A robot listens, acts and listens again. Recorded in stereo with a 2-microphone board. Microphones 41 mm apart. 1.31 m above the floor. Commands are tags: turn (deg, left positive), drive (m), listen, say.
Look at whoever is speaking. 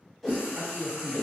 <turn deg="-90"/>
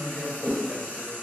<turn deg="10"/>
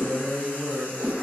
<say>Facing the man speaking.</say>